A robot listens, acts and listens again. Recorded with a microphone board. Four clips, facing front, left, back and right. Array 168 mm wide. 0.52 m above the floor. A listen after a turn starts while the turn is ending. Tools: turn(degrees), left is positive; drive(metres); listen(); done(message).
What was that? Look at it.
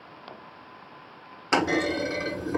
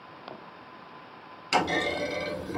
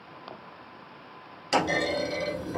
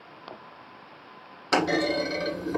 turn(degrees=-35)
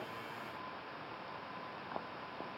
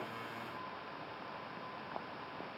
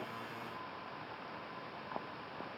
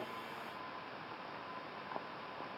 done("Facing where the clunk came from. I can't hear it now.")